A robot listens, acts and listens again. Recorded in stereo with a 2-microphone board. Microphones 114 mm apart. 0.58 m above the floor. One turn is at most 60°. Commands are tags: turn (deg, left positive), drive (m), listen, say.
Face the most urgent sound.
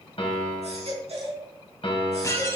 <turn deg="-60"/>
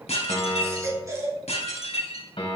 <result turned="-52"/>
<turn deg="-30"/>
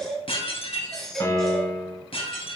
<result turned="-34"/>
<say>Facing the baby crying.</say>